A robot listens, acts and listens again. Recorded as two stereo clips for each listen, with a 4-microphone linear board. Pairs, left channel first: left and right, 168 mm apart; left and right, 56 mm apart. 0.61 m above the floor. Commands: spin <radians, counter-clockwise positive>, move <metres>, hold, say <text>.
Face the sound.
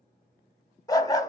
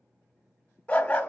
spin 0.35
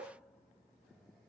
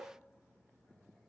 hold
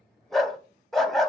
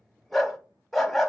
say Found it: a dog barking, straight ahead, under 1 m away.